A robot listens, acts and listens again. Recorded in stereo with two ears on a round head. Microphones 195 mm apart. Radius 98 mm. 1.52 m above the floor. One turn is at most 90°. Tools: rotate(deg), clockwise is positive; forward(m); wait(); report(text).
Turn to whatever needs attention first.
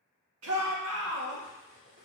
rotate(90)
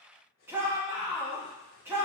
rotate(10)
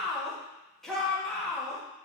report("Found it: a shout, straight ahead, 2 to 4 m away.")